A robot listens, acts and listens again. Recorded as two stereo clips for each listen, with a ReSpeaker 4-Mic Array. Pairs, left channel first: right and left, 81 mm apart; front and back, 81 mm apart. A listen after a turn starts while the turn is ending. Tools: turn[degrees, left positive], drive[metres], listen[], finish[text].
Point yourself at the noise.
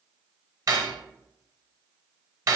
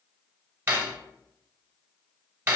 Thought: The cutlery clinking: 125° left.
Action: turn[125]
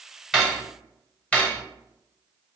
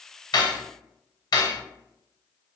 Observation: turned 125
Thought: The cutlery clinking is now 20° right.
Action: turn[-20]
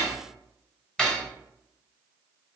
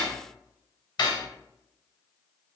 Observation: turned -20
Thought: The cutlery clinking is now 10° right.
Action: turn[-10]
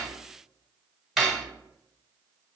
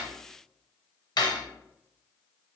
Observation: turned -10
Action: finish[Facing the cutlery clinking, under 1 m away.]